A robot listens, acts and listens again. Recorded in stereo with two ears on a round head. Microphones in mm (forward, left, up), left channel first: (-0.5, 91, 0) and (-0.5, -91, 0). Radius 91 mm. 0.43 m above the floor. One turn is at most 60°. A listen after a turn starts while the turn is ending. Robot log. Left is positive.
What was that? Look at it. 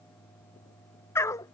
note: The dog barking: about 15° left or 165° left.
cmd yaw +15
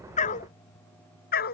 note: So it is at 130° left.
cmd yaw +60
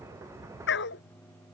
note: The dog barking is now 60° left.
cmd yaw +60
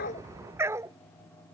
note: The dog barking is now 15° right.
cmd yaw -15
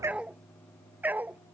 note: The dog barking is now 10° right.
cmd yaw -10
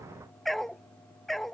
end: Found it: a dog barking, straight ahead.